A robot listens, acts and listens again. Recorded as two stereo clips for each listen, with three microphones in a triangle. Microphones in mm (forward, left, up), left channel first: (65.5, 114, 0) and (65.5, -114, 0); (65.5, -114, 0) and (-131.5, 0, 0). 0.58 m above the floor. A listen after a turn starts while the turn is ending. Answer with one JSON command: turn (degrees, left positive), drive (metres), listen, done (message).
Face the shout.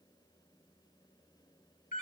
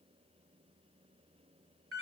{"listen": true}
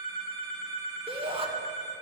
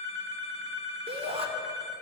{"turn": -150}
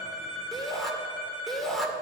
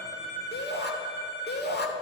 {"done": "Found it: a shout, straight ahead, 2 to 4 m away."}